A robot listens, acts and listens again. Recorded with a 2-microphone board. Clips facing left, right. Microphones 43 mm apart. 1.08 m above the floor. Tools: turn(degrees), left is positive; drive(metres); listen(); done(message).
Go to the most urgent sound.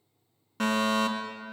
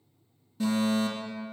turn(degrees=65)
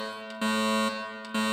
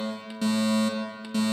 turn(degrees=30)
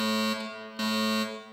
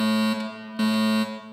turn(degrees=-15)
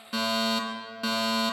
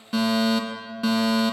drive(metres=1.0)
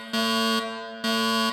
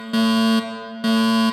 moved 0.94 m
turn(degrees=-15)
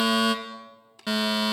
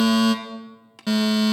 drive(metres=1.0)
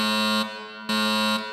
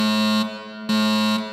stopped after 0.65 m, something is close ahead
done("Arrived at the fire alarm, straight ahead.")